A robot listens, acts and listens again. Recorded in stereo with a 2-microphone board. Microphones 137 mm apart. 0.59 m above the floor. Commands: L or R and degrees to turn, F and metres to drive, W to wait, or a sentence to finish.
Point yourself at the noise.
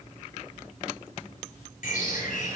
L75
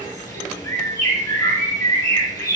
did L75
L25
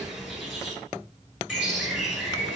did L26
Facing the bird, 1 to 2 m away.